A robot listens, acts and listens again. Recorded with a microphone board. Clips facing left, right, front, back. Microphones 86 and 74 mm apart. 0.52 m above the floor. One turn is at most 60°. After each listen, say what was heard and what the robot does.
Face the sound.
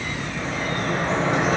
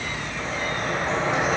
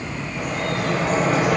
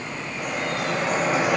Found it: dripping, straight ahead, over 4 m away.